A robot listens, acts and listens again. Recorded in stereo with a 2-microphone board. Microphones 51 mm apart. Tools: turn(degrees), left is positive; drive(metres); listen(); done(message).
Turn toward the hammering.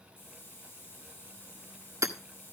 turn(degrees=-90)
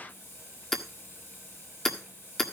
done("Found it: hammering, straight ahead, 1 to 2 m away.")